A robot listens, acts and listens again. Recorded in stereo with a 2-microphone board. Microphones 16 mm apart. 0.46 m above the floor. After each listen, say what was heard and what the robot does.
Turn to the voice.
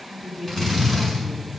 Turn 30° right.
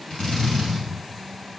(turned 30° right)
Keep listening.
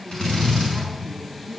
So it is at 20° left. Turn 20° left.
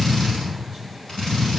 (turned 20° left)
Keep listening.
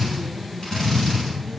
Keep listening.
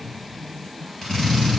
Facing the woman speaking.